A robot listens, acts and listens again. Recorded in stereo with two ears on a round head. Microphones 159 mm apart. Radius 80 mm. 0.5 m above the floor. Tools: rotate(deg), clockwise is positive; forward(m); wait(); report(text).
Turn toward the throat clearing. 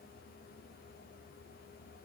wait()
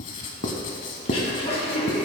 rotate(-35)
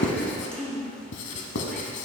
report("Found it: throat clearing, straight ahead.")